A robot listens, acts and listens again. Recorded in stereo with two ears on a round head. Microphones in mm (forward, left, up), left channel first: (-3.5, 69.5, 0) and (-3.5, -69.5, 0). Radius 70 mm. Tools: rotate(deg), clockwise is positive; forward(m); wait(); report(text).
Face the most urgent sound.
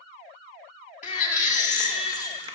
rotate(-50)
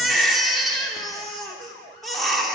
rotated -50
report("Found it: a baby crying, straight ahead.")